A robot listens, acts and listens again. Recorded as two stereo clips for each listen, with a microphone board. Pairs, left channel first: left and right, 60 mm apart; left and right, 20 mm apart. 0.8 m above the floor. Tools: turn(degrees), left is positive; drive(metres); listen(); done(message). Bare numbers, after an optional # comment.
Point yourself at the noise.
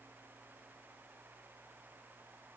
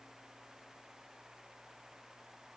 listen()
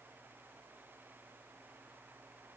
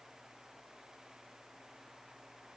listen()
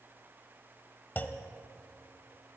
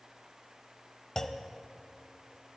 # The clunk: about 30° left or 150° left.
turn(30)
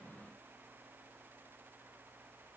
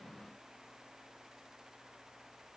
listen()
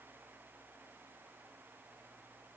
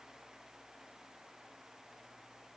done("I heard a clunk, but can't make it out now. It was about straight ahead or 120° left.")